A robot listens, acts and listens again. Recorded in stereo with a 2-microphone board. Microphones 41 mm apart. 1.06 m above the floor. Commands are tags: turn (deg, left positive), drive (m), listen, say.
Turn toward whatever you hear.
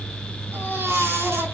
<turn deg="-90"/>
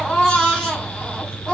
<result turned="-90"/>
<turn deg="15"/>
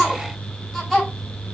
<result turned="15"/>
<say>Found it: a baby crying, straight ahead.</say>